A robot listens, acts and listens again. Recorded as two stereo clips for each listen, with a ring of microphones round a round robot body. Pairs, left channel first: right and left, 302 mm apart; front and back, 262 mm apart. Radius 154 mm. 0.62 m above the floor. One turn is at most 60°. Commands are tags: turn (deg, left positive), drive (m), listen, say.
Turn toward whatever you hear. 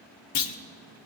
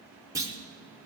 <turn deg="-60"/>
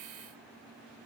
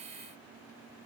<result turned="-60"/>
<turn deg="-40"/>
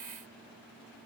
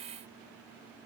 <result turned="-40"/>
<say>I heard a clunk from this way, but can't make it out now.</say>